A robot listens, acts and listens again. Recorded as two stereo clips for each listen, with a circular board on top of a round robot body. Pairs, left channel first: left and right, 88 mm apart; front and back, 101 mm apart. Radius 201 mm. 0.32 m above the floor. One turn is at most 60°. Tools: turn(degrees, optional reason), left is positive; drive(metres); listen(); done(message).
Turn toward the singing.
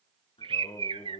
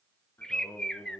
turn(degrees=60, reason="The singing: 65° left.")
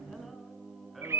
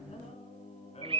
done("Facing the singing.")